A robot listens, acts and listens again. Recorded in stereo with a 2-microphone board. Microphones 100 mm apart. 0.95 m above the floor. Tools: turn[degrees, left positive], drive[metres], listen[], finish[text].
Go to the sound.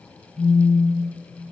Action: turn[30]
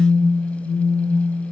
Thought: So it is at 30° right.
Action: turn[-30]
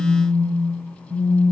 Action: drive[1.0]
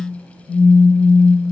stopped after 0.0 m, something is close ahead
Action: finish[Blocked. The phone buzzing is further on, straight ahead.]